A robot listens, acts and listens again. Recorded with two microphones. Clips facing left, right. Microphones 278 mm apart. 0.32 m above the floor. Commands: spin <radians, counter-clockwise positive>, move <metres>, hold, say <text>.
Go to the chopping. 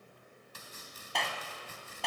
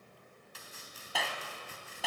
spin 0.87
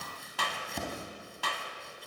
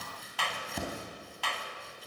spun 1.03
move 1.0
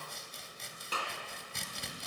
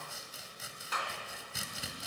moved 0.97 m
move 1.0
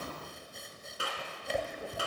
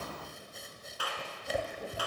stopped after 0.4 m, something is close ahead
say Arrived at the chopping, straight ahead.